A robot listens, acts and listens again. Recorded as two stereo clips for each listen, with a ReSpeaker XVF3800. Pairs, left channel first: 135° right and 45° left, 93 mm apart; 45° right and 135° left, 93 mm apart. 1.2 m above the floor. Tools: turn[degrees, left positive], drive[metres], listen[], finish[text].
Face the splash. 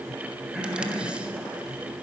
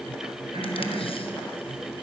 Action: listen[]
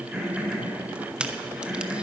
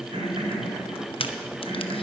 Action: listen[]
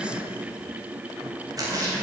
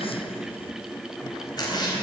Action: finish[Found it: a splash, straight ahead.]